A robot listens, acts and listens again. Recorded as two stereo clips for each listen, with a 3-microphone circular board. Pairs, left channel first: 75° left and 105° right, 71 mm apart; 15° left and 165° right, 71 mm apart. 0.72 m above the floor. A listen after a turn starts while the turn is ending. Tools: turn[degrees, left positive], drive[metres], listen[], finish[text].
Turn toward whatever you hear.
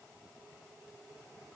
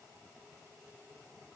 Action: listen[]
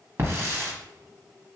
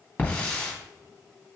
Thought: The hiss: 55° right.
Action: turn[-55]
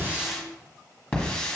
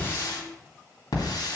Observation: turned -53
Action: finish[Facing the hiss.]